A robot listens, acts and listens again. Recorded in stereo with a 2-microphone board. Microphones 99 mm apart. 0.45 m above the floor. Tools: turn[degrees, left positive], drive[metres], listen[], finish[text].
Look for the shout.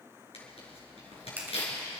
Action: listen[]
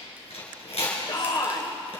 Thought: The shout: about 45° left or 135° left.
Action: turn[45]
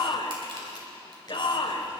Thought: So it is at 80° left.
Action: turn[80]
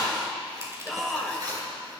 Action: finish[Found it: a shout, straight ahead, 1 to 2 m away.]